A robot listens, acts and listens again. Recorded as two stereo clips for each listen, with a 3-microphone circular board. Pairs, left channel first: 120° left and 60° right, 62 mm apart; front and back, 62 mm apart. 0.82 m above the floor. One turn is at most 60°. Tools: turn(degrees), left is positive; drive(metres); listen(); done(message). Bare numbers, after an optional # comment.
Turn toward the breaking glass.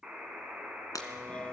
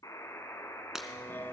# The breaking glass: 100° left.
turn(60)
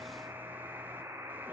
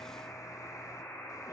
# Nothing new. It was at 40° left.
turn(40)
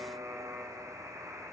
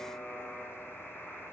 done("Facing where the breaking glass came from. I can't hear it now.")